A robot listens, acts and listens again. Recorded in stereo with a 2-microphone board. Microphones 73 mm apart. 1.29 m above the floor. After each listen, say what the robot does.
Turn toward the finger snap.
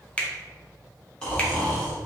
Turn 15° left.
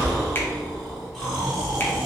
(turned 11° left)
Keep listening.
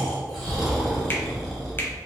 Keep listening.
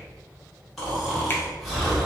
I heard a finger snap, but can't make it out now. It was about 5° left or 150° left.